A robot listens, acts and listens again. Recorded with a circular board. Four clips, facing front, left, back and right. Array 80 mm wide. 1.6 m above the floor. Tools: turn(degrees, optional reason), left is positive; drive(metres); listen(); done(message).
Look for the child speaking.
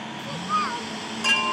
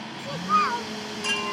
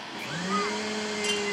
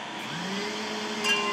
turn(degrees=75, reason="The child speaking: 75° left.")
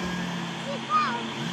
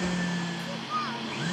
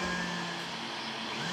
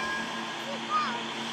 turn(degrees=-15, reason="The child speaking is now 15° right.")
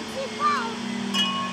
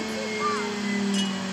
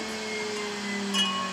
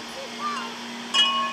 done("Found it: a child speaking, straight ahead.")